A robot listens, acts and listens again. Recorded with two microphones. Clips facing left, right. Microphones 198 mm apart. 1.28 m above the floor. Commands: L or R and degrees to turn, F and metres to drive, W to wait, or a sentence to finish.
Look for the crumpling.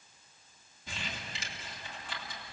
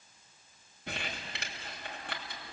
R65
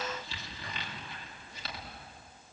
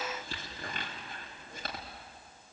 R50
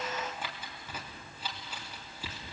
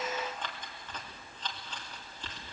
L10
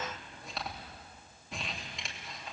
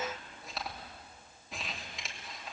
Facing the crumpling, 2 to 4 m away.